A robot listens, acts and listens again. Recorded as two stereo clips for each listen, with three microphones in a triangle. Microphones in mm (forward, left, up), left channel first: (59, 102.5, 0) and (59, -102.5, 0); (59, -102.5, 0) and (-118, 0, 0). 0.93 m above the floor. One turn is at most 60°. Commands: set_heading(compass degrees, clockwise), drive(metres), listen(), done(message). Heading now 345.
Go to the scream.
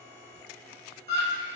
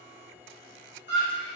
set_heading(40)
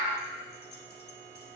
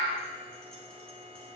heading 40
set_heading(55)
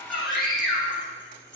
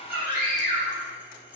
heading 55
drive(1.0)
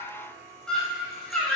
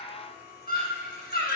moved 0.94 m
drive(1.0)
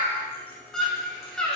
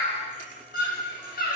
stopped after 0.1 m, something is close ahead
done("Arrived at the scream, straight ahead.")